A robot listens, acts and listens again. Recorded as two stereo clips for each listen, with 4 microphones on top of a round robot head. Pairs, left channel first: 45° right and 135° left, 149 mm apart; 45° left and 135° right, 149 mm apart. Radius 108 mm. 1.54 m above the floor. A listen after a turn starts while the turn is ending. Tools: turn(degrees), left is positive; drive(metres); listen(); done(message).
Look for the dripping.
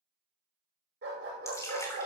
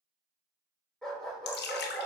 turn(degrees=25)
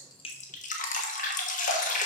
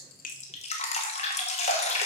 done("Found it: dripping, straight ahead, 1 to 2 m away.")